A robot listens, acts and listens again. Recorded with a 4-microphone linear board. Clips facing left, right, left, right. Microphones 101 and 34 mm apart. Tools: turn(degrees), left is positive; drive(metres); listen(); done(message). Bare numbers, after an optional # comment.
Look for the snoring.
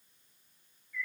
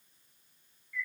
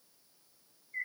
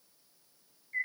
listen()
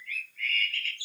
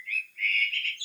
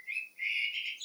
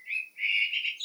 listen()
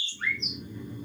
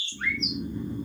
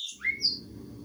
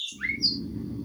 # The snoring: about 30° right or 150° right.
turn(-30)
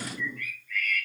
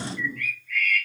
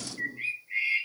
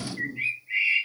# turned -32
done("Found it: snoring, straight ahead, 1 to 2 m away.")